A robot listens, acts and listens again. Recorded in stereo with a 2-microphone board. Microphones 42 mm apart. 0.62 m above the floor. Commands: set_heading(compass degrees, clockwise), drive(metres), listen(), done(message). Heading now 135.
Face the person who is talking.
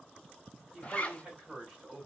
set_heading(155)
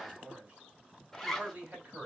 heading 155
set_heading(290)
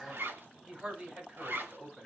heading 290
set_heading(305)
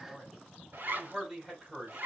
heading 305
done("Found it: a man speaking, straight ahead.")